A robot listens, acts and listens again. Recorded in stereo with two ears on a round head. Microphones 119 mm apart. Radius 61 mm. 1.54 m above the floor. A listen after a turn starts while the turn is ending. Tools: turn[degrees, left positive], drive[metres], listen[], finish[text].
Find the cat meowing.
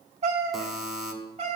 Thought: The cat meowing: about 50° right or 130° right.
Action: turn[-50]
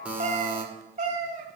Thought: So it is at 65° right.
Action: turn[-65]
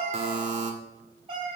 Thought: The cat meowing is now 40° right.
Action: turn[-40]
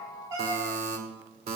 Thought: The cat meowing is now 25° right.
Action: turn[-25]
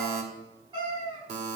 Thought: The cat meowing is now 35° right.
Action: turn[-35]
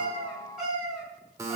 Action: finish[Facing the cat meowing.]